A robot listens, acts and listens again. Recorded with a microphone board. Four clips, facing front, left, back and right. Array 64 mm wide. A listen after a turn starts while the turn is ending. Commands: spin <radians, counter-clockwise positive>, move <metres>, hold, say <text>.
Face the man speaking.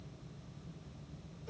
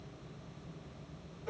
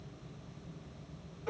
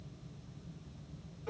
hold
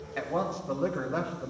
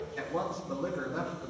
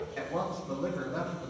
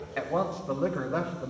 spin -0.96
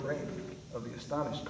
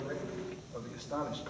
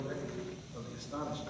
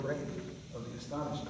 spin 0.44
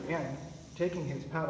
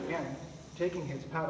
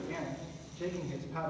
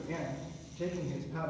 spin 0.79
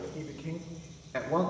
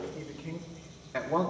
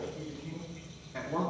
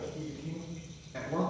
spin 0.70
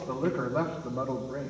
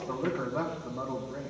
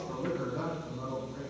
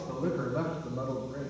say Facing the man speaking, 2 to 4 m away.